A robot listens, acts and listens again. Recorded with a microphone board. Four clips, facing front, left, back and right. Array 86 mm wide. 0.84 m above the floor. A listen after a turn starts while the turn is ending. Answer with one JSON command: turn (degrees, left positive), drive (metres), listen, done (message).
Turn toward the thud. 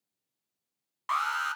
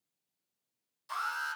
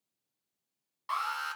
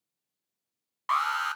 {"listen": true}
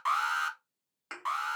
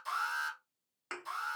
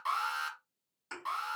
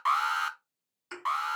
{"turn": 55}
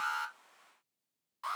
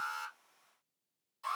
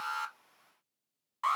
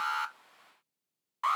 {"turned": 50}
{"done": "Facing where the thud came from. I can't hear it now."}